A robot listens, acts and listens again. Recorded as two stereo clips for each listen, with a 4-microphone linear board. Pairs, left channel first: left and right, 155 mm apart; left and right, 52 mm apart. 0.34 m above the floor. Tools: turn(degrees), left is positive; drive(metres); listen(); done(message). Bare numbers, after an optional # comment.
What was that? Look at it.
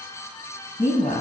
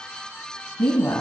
# The woman speaking: about 60° left or 120° left.
turn(60)
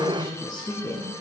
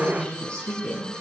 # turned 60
# So it is at 30° left.
turn(30)
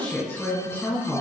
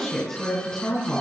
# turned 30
# The woman speaking is now 20° left.
turn(20)
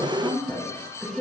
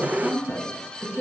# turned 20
# The woman speaking is now 10° left.
turn(10)
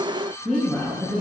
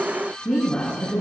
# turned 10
done("Found it: a woman speaking, straight ahead, 2 to 4 m away.")